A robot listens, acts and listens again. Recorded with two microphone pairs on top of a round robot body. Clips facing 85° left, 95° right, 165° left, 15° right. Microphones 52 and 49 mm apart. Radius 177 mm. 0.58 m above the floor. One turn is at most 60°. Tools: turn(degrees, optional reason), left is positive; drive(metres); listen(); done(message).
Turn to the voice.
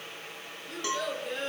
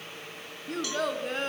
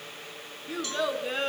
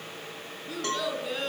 turn(degrees=-60, reason="The child speaking: 135° right.")
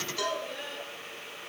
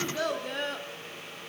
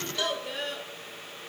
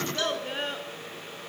turn(degrees=-60, reason="The child speaking is now 70° right.")
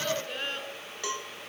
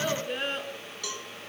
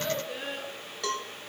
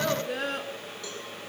turn(degrees=-15, reason="The child speaking is now 15° right.")
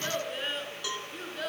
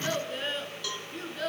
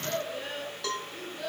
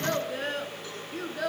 done("Found it: a child speaking, straight ahead, over 4 m away.")